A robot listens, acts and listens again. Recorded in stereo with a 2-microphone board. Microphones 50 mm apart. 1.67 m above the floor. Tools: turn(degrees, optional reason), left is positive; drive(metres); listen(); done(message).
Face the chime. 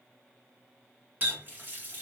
listen()
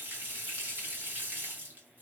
listen()
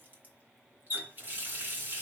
done("I can't make out a chime to turn to.")